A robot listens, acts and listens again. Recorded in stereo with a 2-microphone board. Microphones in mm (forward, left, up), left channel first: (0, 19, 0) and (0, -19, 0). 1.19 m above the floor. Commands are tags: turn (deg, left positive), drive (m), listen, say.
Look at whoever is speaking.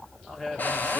<turn deg="30"/>
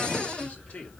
<turn deg="140"/>
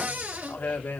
<turn deg="65"/>
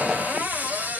<listen/>
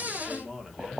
<turn deg="-20"/>
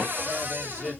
<listen/>
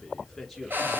<say>Facing the man speaking.</say>